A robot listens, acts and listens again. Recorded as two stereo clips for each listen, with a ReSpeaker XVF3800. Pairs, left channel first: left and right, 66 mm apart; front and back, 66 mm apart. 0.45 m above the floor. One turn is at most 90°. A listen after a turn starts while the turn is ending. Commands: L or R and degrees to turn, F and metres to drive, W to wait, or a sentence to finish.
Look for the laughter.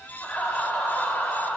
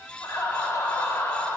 L35
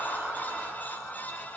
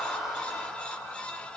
L25
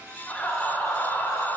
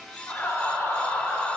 L60
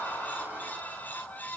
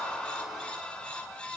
L15
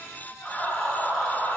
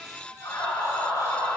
L10
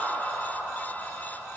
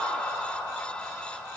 Found it: laughter, straight ahead.